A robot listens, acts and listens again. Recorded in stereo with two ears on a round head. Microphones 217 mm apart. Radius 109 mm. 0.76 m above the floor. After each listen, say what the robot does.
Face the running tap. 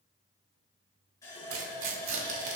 Turn 30° left.
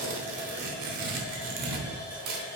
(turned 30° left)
Turn 15° right.
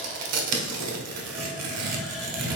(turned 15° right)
Keep listening.
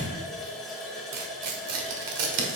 Facing the running tap, 2 to 4 m away.